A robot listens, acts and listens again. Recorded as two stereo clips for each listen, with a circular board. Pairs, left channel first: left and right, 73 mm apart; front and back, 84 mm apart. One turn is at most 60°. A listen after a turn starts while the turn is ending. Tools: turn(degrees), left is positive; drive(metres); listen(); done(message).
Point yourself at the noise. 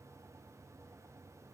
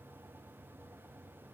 listen()
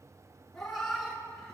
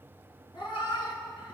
turn(degrees=10)
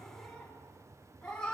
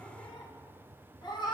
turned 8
turn(degrees=15)
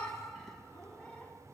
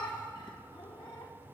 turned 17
turn(degrees=15)
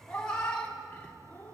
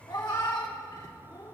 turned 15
turn(degrees=25)
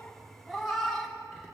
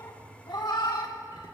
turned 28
done("Facing the cat meowing.")